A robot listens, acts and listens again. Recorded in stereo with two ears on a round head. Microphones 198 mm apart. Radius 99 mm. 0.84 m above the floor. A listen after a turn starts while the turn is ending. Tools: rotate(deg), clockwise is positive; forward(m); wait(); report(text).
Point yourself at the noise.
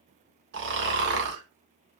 rotate(55)
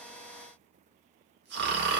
rotate(60)
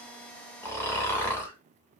rotate(-10)
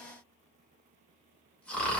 report("Found it: snoring, straight ahead, under 1 m away.")